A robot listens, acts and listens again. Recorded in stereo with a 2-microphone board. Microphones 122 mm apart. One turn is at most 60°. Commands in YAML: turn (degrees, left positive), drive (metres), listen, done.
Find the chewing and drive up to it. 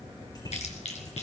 turn: 60
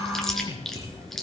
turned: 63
drive: 1.0
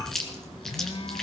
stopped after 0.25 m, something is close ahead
done: "Something is in my way. I am facing the chewing but have not reached it."